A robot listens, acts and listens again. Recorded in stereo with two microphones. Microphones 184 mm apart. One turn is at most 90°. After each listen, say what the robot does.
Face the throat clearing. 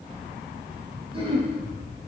Turn 30° right.
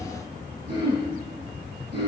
Turn 90° right.
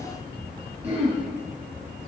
Turn 35° right.
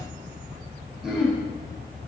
Facing the throat clearing, 2 to 4 m away.